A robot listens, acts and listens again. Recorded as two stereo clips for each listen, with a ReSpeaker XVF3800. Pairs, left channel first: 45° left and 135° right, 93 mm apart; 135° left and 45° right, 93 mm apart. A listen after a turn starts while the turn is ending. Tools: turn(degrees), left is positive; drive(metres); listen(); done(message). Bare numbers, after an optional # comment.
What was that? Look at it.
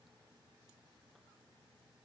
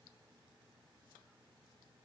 listen()
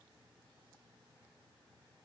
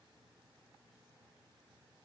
listen()
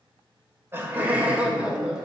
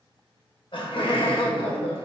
# The laughter: 140° left.
turn(140)
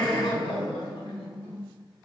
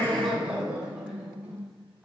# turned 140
# The laughter is now 35° left.
turn(35)
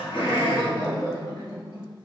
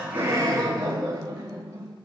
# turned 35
done("Facing the laughter, 2 to 4 m away.")